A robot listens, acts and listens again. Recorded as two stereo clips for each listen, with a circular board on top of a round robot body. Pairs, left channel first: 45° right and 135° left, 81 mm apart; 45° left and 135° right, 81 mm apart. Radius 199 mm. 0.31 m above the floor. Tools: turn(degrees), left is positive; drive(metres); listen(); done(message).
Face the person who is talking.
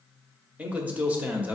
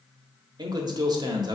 turn(degrees=-155)
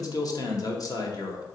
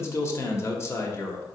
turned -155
turn(degrees=-10)
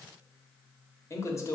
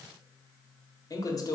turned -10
done("Found it: a man speaking, straight ahead.")